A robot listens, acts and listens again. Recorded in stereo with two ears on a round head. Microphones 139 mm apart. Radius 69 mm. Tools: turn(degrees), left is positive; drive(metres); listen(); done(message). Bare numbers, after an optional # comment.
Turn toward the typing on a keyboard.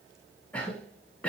listen()
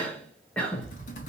# The typing on a keyboard: about 55° left or 125° left.
turn(55)
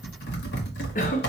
# So it is at 75° left.
turn(75)
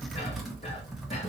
done("Facing the typing on a keyboard.")